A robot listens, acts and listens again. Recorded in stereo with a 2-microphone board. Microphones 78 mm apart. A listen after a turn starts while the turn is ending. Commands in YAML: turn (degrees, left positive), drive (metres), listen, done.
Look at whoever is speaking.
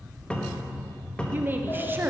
turn: -25
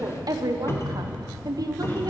turn: -130
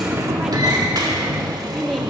done: "Facing the woman speaking, under 1 m away."